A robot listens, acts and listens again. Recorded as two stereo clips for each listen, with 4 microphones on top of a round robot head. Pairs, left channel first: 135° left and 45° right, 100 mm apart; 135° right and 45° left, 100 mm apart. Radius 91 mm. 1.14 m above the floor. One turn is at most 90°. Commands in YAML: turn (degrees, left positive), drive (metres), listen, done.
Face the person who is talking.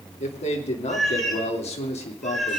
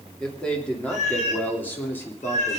turn: 90
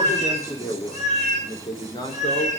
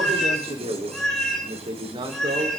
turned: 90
turn: 85
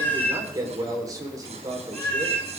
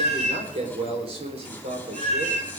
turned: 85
turn: 15
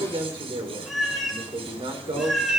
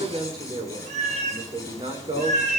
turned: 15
done: "Found it: a man speaking, straight ahead."